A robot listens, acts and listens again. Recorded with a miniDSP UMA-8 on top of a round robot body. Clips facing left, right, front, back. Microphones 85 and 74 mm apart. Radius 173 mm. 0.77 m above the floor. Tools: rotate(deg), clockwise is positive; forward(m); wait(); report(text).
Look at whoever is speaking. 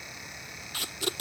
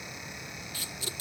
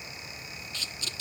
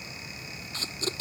wait()
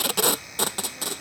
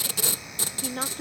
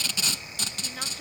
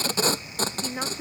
rotate(110)
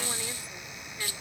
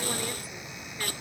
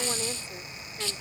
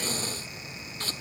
wait()
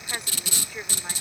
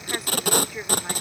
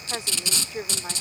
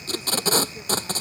report("Found it: a woman speaking, straight ahead.")